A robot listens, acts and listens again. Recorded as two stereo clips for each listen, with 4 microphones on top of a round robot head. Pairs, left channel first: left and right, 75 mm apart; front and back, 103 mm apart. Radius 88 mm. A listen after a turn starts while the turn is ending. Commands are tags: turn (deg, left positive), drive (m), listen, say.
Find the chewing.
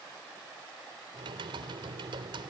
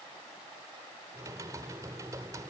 <listen/>
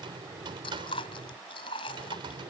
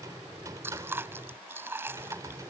<turn deg="115"/>
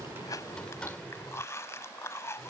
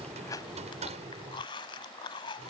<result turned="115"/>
<turn deg="40"/>
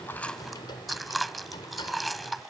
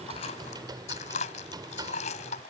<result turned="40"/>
<say>Found it: chewing, straight ahead.</say>